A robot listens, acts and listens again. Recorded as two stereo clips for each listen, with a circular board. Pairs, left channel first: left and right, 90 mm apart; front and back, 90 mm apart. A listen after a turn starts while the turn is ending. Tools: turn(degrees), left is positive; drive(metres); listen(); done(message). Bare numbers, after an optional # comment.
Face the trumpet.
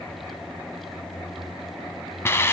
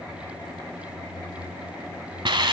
listen()
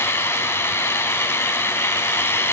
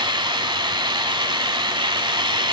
listen()
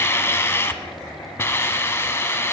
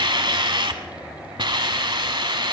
done("I can't make out a trumpet to turn to.")